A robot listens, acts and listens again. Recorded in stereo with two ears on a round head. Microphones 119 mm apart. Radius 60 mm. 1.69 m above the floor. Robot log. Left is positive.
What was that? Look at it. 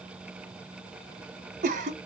note: The cough: about 55° right or 125° right.
cmd yaw -55
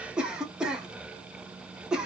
end: Found it: a cough, straight ahead, under 1 m away.